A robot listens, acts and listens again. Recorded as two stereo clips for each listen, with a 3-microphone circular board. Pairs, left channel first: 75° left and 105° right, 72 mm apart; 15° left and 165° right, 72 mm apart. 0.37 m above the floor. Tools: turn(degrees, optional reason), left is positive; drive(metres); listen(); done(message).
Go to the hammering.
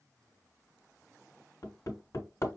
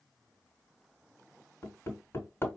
turn(degrees=60, reason="The hammering: 60° left.")
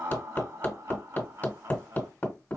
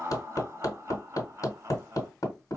turn(degrees=20, reason="The hammering is now 20° left.")
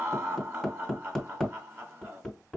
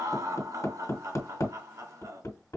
drive(metres=1.0)
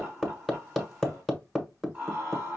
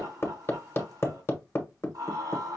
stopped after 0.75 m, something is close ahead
turn(degrees=-10, reason="The hammering is now 10° right.")
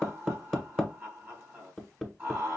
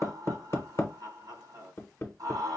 done("I am next to the hammering.")